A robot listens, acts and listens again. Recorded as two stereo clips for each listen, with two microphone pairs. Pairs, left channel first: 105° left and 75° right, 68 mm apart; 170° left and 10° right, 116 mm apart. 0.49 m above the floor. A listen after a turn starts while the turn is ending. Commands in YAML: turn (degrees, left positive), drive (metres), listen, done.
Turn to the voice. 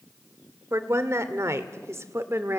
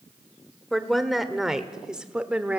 turn: -85
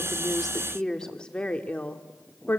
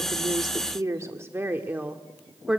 turn: 75
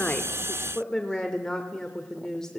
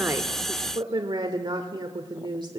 turn: 25
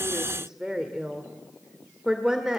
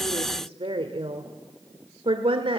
done: "Facing the woman speaking."